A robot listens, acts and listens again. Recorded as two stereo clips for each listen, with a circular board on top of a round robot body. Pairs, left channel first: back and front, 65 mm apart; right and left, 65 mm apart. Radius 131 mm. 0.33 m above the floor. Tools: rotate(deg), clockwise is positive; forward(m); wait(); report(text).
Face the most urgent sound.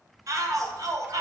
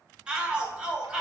rotate(-15)
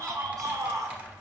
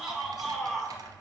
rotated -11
report("Facing the shout.")